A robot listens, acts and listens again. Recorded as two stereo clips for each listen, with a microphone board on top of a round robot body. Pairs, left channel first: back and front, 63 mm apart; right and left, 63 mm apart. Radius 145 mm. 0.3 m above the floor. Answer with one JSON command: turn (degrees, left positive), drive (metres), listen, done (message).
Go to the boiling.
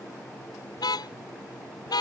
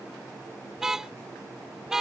{"listen": true}
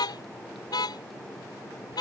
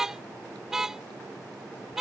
{"listen": true}
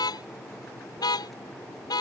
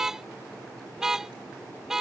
{"done": "I can't make out boiling to turn to."}